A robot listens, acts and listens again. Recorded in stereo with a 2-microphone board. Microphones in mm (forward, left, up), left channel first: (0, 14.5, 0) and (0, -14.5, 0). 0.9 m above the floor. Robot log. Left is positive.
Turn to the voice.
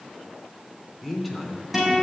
cmd yaw -30
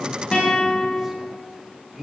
note: So it is at 160° right.
cmd yaw -160
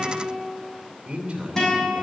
note: The man speaking is now 40° right.
cmd yaw -40
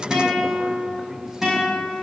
cmd idle
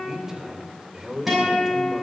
note: The man speaking is now 10° right.
cmd yaw -10
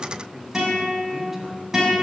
end: Facing the man speaking.